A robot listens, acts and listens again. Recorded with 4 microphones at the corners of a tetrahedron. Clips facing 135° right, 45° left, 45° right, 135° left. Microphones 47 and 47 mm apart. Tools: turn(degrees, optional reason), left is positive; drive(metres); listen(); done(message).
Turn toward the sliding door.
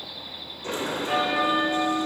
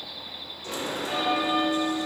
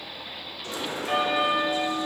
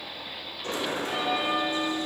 turn(degrees=175, reason="The sliding door: 175° left.")
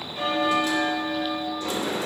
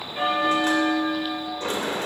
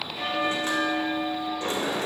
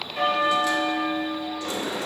done("Facing the sliding door.")